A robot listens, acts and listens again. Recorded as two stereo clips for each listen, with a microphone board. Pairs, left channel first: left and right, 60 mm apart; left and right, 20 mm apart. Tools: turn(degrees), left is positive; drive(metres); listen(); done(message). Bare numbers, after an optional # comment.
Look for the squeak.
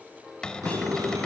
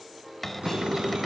# The squeak: about 75° right or 105° right.
turn(-75)
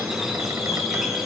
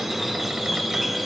done("Found it: a squeak, straight ahead, 2 to 4 m away.")